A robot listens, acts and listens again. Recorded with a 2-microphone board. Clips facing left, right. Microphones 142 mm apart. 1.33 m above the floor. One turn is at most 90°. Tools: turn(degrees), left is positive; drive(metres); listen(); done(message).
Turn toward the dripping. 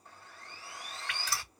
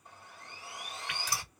turn(degrees=-15)
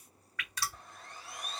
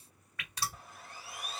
turn(degrees=-90)
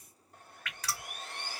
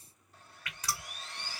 turn(degrees=-20)
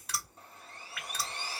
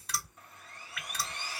done("Found it: dripping, straight ahead.")